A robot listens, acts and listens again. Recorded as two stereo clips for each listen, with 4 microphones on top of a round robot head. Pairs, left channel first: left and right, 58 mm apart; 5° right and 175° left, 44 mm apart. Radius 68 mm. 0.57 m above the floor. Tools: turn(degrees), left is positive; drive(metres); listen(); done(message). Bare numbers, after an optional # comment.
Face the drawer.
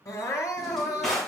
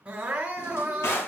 done("Facing the drawer, 2 to 4 m away.")